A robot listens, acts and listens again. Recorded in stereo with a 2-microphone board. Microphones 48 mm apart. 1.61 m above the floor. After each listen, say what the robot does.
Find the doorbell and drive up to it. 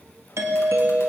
Turn 75° right.
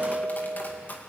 Drive 1.0 m forward.
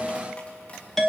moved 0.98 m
Drive 1.0 m forward.
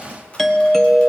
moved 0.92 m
Drive 1.0 m forward.
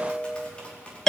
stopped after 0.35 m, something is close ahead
Turn 10° left.
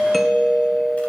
I am next to the doorbell.